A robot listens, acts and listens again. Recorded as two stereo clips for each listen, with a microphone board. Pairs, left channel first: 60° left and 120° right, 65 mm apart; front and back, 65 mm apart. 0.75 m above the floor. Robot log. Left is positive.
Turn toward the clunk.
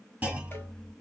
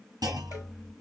note: The clunk: 175° left.
cmd yaw +175
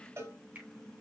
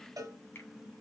end: I heard a clunk from this way, but can't make it out now.